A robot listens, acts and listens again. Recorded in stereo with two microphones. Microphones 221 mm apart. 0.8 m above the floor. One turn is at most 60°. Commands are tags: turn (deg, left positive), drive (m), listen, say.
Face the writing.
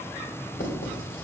<turn deg="60"/>
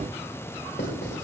<turn deg="55"/>
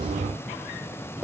<say>Facing the writing, 2 to 4 m away.</say>